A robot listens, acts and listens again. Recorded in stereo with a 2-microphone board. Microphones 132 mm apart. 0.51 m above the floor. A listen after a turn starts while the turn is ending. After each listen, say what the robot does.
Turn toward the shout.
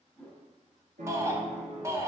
Turn 20° right.
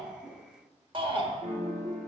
Turn 130° right.
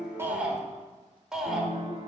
Found it: a shout, straight ahead.